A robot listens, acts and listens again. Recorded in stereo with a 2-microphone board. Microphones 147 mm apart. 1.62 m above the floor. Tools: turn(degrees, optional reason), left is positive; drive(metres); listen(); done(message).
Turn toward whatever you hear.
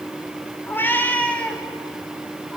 turn(degrees=-30)
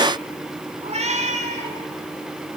turn(degrees=-130, reason="So it is at 130° right.")
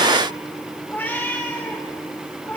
turn(degrees=15, reason="The cat meowing is now 15° left.")
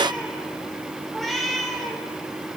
done("Facing the cat meowing.")